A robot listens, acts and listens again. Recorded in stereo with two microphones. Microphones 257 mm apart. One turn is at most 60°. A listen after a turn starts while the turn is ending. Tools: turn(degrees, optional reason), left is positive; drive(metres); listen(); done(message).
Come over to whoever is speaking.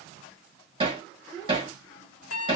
turn(degrees=15, reason="The child speaking: about 15° left or 165° left.")
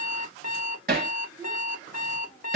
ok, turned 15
listen()
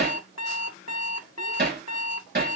listen()
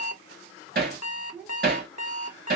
drive(metres=1.0)
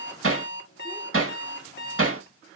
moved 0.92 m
listen()
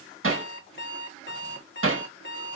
listen()
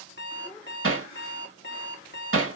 done("Facing where the child speaking came from. I can't hear it now. I did not reach it.")